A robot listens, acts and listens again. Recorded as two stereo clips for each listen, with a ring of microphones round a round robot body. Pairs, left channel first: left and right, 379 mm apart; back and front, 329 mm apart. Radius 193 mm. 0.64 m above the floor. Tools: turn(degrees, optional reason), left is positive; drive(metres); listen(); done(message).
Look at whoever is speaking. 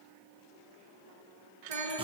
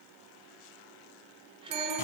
turn(degrees=-75, reason="The child speaking: 75° right.")
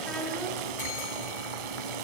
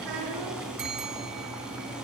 listen()
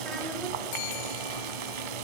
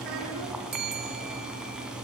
listen()
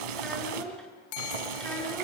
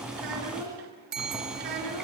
done("Found it: a child speaking, straight ahead.")